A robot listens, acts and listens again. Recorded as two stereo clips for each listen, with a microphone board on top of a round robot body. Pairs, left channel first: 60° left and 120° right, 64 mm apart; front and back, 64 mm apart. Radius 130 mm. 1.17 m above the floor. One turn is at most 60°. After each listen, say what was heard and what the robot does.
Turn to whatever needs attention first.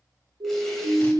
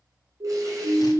The siren: 140° right. Turn 60° right.
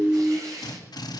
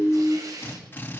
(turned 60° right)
The siren is now 80° right. Turn 60° right.
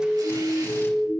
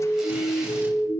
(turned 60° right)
The siren is now 20° right. Turn 20° right.
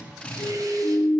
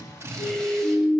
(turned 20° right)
Found it: a siren, straight ahead.